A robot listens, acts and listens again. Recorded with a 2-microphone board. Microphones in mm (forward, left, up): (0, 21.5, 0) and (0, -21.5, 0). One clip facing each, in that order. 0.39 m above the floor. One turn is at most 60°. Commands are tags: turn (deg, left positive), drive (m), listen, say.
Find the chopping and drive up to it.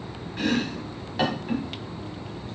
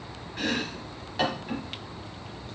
<turn deg="30"/>
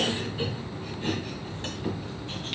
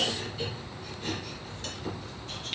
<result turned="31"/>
<turn deg="60"/>
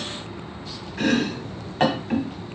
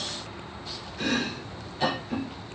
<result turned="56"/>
<turn deg="60"/>
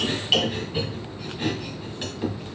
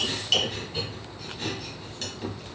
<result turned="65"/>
<turn deg="20"/>
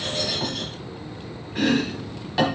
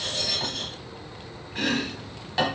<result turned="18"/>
<drive m="1.0"/>
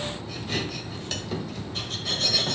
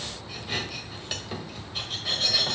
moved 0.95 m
<turn deg="-10"/>
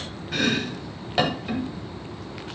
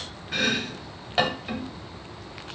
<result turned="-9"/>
<drive m="1.0"/>
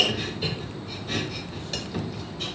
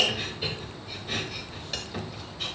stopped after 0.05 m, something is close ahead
<say>Arrived at the chopping, straight ahead.</say>